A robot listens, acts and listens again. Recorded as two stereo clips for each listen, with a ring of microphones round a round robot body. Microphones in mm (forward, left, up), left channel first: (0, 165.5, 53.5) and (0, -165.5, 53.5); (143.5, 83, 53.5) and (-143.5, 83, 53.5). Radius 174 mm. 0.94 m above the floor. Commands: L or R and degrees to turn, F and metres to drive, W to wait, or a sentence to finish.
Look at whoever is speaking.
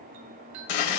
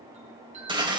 W
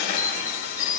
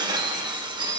W
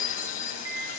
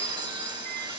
I can't make out anyone speaking to turn to.